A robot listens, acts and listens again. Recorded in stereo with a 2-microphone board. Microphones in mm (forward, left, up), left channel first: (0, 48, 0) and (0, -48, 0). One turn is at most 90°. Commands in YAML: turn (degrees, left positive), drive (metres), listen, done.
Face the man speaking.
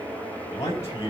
turn: 35
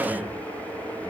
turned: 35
listen: true
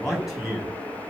done: "Facing the man speaking, over 4 m away."